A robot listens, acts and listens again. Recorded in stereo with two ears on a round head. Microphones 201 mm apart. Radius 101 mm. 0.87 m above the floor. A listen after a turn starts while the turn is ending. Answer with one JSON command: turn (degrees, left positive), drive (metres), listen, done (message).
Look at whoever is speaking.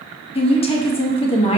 {"turn": 25}
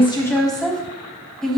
{"done": "Facing the woman speaking."}